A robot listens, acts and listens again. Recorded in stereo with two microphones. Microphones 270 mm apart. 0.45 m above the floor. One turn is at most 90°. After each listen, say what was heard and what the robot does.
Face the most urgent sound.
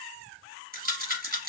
Keep listening.
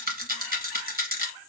Keep listening.
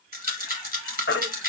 The baby crying: about 45° left or 135° left. Turn 45° left.
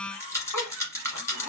Keep listening.
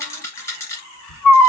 So it is at 85° left. Turn 85° left.
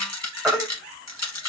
Facing the baby crying.